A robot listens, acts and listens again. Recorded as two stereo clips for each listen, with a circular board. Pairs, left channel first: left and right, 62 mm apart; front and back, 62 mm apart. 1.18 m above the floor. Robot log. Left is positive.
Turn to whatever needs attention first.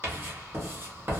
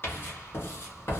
cmd idle
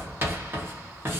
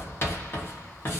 cmd idle
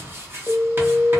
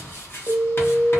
note: The alarm: 175° right.
cmd yaw -175
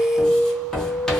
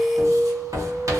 note: The alarm is now 35° left.
cmd yaw +35
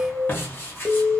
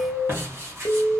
end: Found it: an alarm, straight ahead, 1 to 2 m away.